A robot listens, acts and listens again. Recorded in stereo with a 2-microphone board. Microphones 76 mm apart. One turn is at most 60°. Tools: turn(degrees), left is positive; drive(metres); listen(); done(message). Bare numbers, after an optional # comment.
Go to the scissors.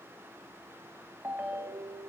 listen()
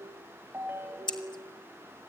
turn(60)
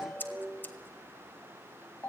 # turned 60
# So it is at 25° left.
turn(25)
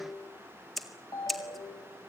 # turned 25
drive(1.0)
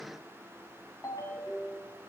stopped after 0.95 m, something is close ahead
listen()
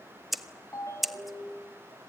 done("Arrived at the scissors, straight ahead.")